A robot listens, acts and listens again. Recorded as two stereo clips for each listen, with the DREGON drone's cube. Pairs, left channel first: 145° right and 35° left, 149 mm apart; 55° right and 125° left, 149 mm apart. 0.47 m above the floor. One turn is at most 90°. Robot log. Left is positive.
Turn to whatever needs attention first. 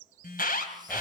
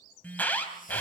note: The alarm: 135° right.
cmd yaw -90
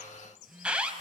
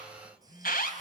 note: The alarm is now 50° right.
cmd yaw -50
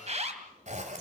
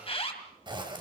end: Facing the alarm.